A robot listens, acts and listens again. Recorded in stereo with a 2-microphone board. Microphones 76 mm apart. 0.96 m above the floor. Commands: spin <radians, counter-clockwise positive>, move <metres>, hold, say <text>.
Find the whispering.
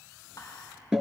spin 0.87
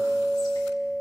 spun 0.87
hold
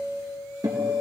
hold
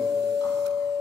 say I heard whispering, but can't make it out now. It was about straight ahead or 80° left.